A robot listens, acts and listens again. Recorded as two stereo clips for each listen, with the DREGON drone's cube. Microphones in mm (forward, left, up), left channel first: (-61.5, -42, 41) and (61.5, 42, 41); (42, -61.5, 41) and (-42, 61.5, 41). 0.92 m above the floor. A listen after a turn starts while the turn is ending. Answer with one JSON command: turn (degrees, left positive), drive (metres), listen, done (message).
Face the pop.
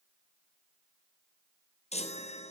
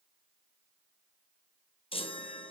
{"listen": true}
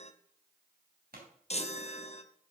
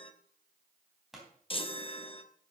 {"turn": 35}
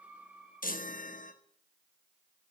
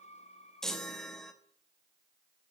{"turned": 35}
{"done": "I heard a pop from this way, but can't make it out now."}